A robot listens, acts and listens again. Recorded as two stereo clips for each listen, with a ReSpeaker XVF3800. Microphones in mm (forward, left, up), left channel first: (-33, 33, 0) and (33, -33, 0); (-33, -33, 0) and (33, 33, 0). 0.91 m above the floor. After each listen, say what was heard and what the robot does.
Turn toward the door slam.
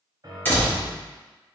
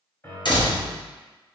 The door slam: 160° right. Turn 160° right.
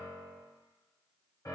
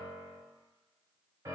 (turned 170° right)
Nothing new. It was at 10° left. Turn 10° left.
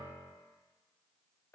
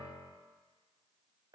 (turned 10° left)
I heard a door slam from this way, but can't make it out now.